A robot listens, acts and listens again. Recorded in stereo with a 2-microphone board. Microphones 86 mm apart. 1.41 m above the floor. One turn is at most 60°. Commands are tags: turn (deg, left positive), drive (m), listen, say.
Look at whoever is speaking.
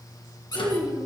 <turn deg="-60"/>
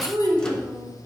<turn deg="-50"/>
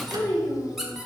<say>Facing the child speaking.</say>